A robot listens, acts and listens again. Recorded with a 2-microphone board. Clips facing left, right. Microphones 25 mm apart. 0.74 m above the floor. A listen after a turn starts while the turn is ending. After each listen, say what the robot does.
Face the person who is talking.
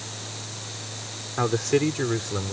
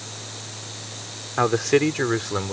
Turn 30° right.
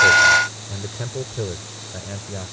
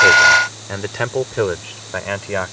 Turn 110° right.
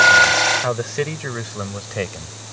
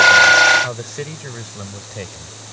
Turn 25° left.
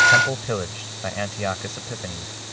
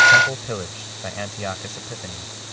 Facing the man speaking.